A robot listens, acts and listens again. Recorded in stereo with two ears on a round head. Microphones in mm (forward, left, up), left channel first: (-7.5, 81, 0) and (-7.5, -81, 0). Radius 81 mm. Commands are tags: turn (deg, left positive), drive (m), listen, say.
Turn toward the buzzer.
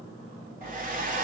<listen/>
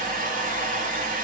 <listen/>
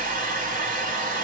<say>I can't make out a buzzer to turn to.</say>